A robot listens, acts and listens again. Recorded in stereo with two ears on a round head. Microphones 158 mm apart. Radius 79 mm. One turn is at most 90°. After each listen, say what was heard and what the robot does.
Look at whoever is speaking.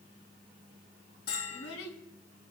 Turn 90° left.
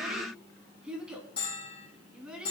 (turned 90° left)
Found it: a child speaking, straight ahead.